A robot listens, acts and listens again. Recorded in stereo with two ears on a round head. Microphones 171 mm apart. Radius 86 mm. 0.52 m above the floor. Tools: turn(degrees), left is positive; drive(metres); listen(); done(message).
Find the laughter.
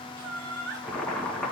turn(degrees=-60)
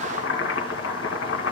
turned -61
listen()
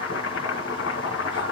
listen()
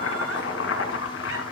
done("I heard laughter, but can't make it out now. It was about straight ahead or 60° right.")